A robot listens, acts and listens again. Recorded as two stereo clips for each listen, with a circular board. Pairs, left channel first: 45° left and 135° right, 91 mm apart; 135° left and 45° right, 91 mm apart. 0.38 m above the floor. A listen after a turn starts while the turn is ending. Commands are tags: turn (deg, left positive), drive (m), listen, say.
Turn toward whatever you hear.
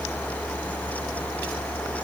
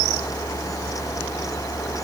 <listen/>
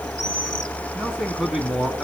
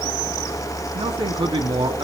<turn deg="-45"/>
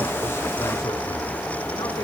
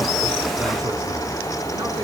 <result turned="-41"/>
<listen/>
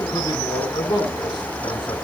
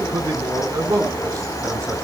<say>Facing the man speaking.</say>